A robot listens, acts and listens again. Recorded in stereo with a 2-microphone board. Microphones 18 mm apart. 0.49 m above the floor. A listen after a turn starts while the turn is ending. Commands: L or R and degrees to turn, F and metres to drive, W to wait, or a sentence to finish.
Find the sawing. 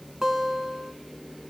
W
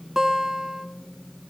W
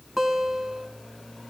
I can't make out sawing, only a guitar.